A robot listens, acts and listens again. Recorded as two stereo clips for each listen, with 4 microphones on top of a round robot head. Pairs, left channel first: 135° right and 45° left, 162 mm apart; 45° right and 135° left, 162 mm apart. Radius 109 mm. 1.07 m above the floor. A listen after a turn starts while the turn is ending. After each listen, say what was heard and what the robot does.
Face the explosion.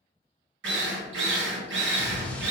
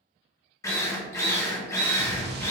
The explosion: 140° left. Turn 140° left.
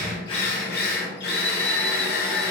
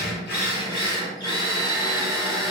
I heard an explosion from this way, but can't make it out now.